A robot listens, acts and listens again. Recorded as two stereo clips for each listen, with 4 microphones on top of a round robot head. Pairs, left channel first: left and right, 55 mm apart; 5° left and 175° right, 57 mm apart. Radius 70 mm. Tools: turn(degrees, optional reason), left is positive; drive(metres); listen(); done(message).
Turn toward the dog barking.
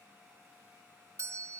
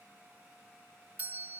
listen()
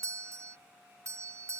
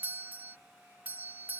listen()
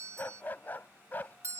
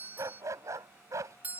turn(degrees=155, reason="The dog barking: 155° left.")
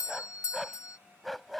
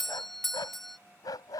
done("Found it: a dog barking, straight ahead.")